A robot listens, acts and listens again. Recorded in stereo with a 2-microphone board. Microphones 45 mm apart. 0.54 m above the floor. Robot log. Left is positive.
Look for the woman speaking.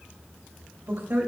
note: The woman speaking: about 70° right or 110° right.
cmd yaw -70
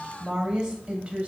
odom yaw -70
note: So it is at 25° right.
cmd yaw -25
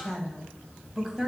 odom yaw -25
note: The woman speaking is now 10° right.
cmd yaw -10
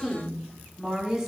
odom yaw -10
note: The woman speaking is now 15° right.
cmd yaw -15
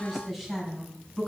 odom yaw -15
end: Facing the woman speaking, 2 to 4 m away.